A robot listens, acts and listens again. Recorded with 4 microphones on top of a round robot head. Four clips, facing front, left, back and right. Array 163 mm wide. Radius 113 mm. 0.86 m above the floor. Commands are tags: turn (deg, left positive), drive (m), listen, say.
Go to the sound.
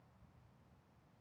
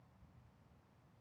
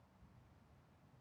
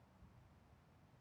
<listen/>
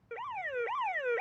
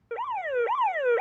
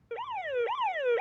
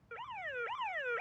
<turn deg="110"/>
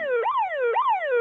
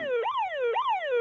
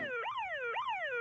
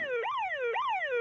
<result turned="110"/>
<turn deg="15"/>
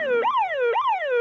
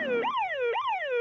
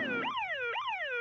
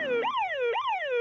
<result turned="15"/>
<drive m="1.0"/>
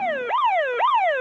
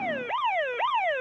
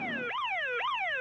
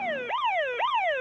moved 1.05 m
<drive m="1.0"/>
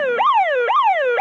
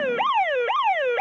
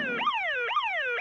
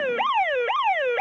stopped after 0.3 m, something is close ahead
<say>Arrived at the alarm, straight ahead.</say>